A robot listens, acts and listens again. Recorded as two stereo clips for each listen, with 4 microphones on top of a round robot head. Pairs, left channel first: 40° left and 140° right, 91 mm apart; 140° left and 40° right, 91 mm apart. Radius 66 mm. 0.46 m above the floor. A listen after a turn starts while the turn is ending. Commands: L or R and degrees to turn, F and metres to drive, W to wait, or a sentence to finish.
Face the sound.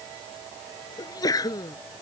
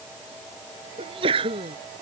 R10
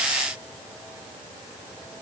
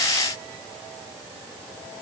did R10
I heard a sneeze from this way, but can't make it out now.